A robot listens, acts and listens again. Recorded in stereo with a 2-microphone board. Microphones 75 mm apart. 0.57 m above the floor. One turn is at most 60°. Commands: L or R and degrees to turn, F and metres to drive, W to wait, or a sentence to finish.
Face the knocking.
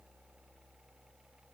W
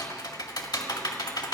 W
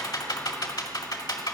I can't make out knocking, only typing on a keyboard.